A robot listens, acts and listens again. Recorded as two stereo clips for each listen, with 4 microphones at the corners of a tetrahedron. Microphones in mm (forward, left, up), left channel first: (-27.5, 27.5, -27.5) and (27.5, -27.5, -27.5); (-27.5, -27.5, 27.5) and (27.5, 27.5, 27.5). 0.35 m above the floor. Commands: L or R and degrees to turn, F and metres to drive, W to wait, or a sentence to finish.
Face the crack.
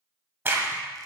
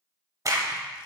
L10
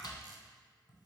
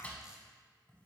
I heard a crack from this way, but can't make it out now.